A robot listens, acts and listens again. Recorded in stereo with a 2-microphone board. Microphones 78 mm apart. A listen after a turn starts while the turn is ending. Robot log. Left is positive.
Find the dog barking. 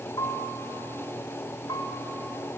cmd idle
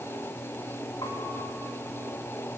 cmd idle
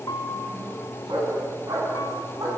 note: The dog barking: about 70° right or 110° right.
cmd yaw -70
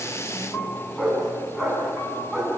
end: Facing the dog barking, over 4 m away.